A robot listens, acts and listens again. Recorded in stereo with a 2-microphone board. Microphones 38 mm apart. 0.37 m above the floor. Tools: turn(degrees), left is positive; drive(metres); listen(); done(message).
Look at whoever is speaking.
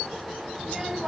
turn(degrees=-30)
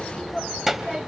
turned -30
turn(degrees=-30)
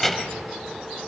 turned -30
done("Facing the child speaking, 1 to 2 m away.")